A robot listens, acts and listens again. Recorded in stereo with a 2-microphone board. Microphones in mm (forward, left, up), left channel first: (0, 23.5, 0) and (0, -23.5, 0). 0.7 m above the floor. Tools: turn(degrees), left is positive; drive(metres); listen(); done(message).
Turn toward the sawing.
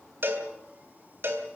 listen()
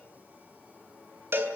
listen()
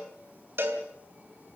done("I can't make out sawing to turn to.")